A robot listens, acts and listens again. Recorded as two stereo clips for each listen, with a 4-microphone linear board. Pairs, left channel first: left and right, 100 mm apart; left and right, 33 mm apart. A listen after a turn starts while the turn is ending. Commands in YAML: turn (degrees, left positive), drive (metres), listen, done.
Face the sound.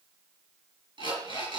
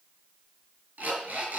turn: -55
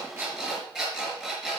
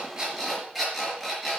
done: "Found it: an alarm clock, straight ahead, over 4 m away."